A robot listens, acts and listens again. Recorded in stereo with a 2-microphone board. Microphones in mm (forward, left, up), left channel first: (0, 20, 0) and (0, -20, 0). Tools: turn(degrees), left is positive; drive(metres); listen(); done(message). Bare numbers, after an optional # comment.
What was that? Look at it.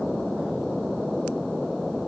listen()
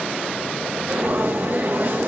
# The frying: about 60° right or 120° right.
turn(-60)
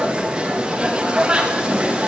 # So it is at 30° right.
turn(-30)
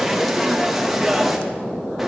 done("Found it: frying, straight ahead.")